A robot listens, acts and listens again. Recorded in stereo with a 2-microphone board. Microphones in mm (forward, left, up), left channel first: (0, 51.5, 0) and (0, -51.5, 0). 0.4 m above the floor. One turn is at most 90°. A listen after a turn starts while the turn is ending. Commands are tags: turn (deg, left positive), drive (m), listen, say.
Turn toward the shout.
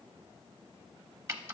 <listen/>
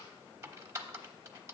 <listen/>
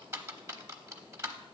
<say>I can't make out a shout to turn to.</say>